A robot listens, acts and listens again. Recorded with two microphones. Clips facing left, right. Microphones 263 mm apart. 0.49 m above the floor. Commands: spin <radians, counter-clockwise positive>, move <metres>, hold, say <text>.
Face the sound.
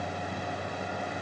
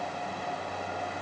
hold
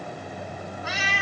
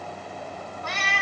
spin 0.52
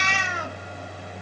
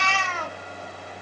spin 2.88
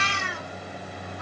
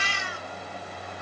spin 1.13
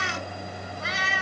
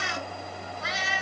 say Facing the cat meowing.